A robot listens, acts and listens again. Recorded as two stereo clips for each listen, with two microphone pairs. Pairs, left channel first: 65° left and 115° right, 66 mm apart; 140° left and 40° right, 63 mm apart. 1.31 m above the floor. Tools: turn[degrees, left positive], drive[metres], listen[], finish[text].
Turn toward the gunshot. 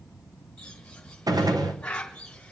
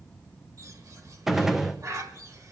Thought: The gunshot: 125° right.
Action: turn[-125]
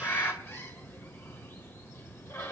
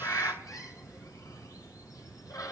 Action: finish[I heard a gunshot from this way, but can't make it out now.]